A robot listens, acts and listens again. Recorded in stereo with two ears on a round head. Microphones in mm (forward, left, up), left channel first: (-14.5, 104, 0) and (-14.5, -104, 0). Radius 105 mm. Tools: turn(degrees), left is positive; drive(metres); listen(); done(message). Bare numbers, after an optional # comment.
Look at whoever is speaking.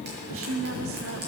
# The woman speaking: about 65° right or 115° right.
turn(-65)
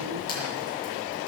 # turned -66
listen()
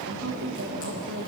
# So it is at 50° right.
turn(-50)
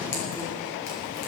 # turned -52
listen()
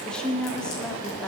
done("Facing the woman speaking, 1 to 2 m away.")